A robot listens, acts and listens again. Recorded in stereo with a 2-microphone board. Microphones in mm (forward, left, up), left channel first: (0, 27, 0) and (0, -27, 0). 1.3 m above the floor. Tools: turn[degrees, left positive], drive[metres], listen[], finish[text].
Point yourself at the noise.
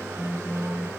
Action: turn[-90]
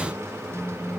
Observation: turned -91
Action: finish[Facing the phone buzzing, over 4 m away.]